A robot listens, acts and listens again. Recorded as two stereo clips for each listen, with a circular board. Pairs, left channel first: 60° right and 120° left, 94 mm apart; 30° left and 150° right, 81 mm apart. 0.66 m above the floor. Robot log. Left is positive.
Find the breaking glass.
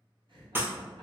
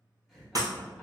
note: The breaking glass: straight behind.
cmd yaw +180
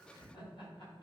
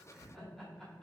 end: I heard breaking glass from this way, but can't make it out now.